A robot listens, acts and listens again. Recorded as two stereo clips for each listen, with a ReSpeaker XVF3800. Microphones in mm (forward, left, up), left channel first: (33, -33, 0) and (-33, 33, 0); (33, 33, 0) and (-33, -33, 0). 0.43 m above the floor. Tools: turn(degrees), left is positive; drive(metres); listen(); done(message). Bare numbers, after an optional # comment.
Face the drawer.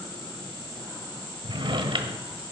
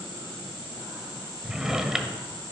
# The drawer: 140° left.
turn(140)
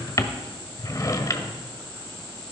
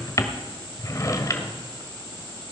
done("Facing the drawer.")